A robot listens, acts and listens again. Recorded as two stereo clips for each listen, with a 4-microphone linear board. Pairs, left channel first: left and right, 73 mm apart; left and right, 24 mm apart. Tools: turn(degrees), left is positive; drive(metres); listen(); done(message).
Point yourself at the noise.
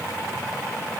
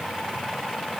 listen()
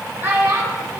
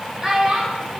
turn(degrees=-35)
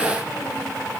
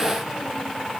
listen()
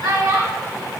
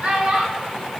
turn(degrees=-105)
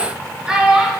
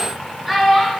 turn(degrees=-15)
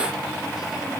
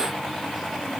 listen()
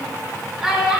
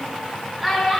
done("Facing the child speaking.")